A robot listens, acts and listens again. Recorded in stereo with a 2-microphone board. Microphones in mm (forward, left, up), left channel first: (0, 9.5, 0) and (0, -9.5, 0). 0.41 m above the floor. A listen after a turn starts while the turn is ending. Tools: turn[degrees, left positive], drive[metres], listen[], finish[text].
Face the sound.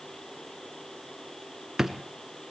Thought: The drawer: about 20° right or 160° right.
Action: turn[-20]
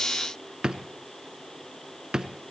Thought: So it is at 140° right.
Action: turn[-140]
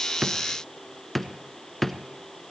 Action: finish[Found it: a drawer, straight ahead.]